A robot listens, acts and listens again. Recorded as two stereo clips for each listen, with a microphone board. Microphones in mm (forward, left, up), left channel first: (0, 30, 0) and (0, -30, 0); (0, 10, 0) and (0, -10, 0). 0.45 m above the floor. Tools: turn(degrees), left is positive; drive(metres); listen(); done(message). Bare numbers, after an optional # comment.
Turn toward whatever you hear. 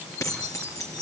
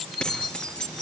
# The keys jangling: about 65° left or 115° left.
turn(65)
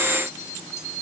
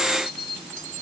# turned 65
listen()
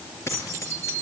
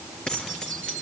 # So it is at 50° left.
turn(50)
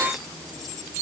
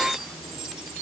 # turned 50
listen()
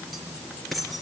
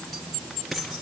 done("Facing the keys jangling, over 4 m away.")